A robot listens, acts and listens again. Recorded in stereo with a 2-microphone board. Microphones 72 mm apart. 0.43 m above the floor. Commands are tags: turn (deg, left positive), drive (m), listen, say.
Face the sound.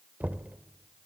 <turn deg="-20"/>
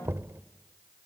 <turn deg="-135"/>
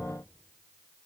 <listen/>
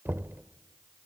<turn deg="-35"/>
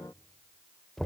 <say>Found it: knocking, straight ahead, under 1 m away.</say>